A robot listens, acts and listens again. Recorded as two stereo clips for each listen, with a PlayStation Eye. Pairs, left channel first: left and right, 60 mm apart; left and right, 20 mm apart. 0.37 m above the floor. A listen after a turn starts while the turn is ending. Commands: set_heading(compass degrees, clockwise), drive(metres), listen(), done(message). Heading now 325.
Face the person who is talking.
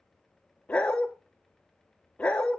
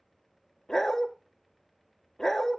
listen()
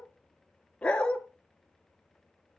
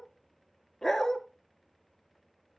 listen()
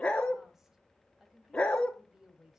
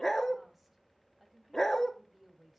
set_heading(355)
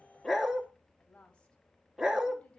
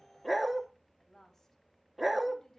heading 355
set_heading(330)
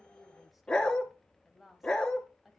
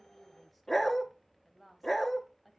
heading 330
done("Found it: a woman speaking, straight ahead, 1 to 2 m away.")